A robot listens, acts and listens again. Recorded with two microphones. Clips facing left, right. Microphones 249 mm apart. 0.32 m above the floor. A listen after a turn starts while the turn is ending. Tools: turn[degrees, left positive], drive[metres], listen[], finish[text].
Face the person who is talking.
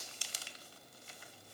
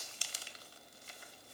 Action: listen[]
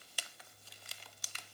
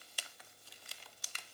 Action: listen[]
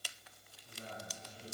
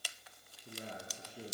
Thought: The man speaking: about 65° right or 115° right.
Action: turn[-65]
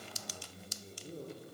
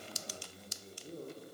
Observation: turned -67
Action: finish[Facing the man speaking, over 4 m away.]